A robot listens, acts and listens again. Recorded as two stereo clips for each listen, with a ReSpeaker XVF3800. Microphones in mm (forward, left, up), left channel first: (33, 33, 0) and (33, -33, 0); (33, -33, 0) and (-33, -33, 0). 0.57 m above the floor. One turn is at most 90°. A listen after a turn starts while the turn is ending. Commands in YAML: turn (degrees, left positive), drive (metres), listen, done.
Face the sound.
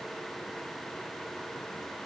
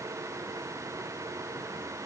listen: true
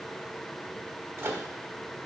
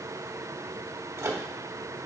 turn: -90
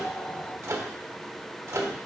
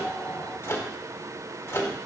turn: -50
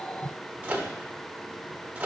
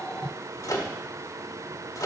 turn: -25
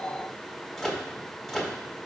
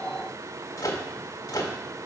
done: "Found it: a microwave, straight ahead, 1 to 2 m away."